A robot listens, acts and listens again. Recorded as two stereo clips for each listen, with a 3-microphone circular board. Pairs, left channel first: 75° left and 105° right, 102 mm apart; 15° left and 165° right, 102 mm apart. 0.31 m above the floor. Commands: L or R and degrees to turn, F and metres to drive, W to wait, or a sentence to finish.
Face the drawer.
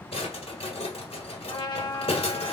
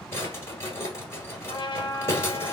L80
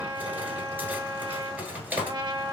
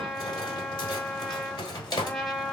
R30
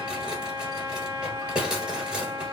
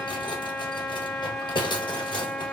R25
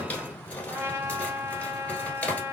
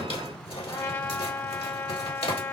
Facing the drawer, 1 to 2 m away.